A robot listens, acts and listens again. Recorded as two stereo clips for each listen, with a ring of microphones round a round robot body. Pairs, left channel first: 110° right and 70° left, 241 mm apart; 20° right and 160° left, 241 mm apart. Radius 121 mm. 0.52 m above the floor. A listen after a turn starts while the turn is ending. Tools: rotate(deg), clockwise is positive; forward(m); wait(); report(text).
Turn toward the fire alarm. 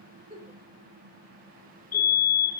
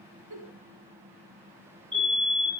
rotate(135)
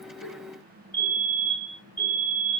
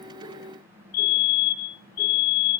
rotate(30)
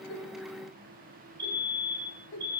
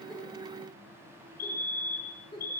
report("Facing the fire alarm, over 4 m away.")